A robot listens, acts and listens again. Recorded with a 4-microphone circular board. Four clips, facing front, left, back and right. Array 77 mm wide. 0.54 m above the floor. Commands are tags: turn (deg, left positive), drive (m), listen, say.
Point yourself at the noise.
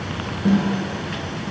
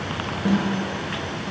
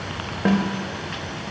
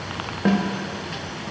<turn deg="-145"/>
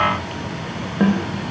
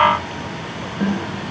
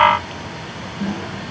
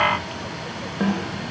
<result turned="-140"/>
<say>Found it: a snare drum, straight ahead, 1 to 2 m away.</say>